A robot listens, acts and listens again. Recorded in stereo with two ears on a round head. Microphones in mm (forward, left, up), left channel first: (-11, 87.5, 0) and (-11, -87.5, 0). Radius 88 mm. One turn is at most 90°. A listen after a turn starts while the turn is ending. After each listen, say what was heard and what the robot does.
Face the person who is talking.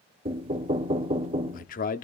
The man speaking: about 45° left or 135° left. Turn 45° left.
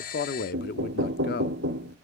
So it is at 75° left. Turn 75° left.
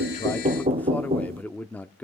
The man speaking is now 10° left. Turn 10° left.
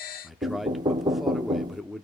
Found it: a man speaking, straight ahead.